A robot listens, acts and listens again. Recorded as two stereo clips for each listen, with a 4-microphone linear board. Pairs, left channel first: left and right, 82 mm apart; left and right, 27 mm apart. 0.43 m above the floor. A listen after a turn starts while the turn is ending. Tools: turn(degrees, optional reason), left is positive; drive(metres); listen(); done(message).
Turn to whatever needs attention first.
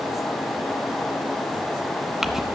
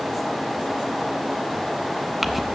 listen()
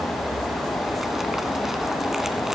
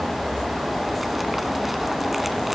listen()
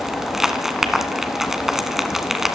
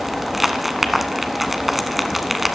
done("I can't make out anything urgent, only crumpling.")